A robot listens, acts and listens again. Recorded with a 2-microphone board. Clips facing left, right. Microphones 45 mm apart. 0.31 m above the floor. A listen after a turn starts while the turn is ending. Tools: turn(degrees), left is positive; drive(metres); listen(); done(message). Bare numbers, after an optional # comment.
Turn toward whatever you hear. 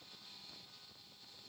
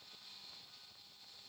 listen()
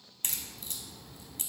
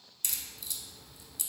# The crack: about 45° left or 135° left.
turn(45)
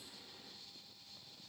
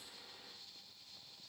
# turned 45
listen()
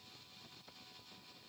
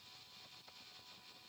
done("I heard a crack, but can't make it out now. It was about straight ahead or 90° left.")